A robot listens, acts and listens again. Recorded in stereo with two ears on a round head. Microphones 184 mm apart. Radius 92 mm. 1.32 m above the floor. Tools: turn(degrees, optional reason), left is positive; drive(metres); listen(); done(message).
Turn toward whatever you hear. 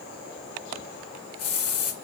turn(degrees=90)
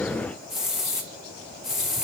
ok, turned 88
done("Found it: a hiss, straight ahead, 1 to 2 m away.")